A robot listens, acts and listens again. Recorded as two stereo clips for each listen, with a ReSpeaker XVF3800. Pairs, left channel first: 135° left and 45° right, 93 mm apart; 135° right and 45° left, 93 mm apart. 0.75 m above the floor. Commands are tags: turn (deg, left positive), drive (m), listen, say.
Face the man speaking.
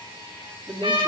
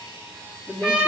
<turn deg="-75"/>
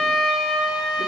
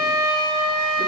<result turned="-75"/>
<listen/>
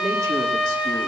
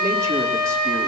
<listen/>
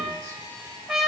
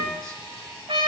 <say>Facing where the man speaking came from. I can't hear it now.</say>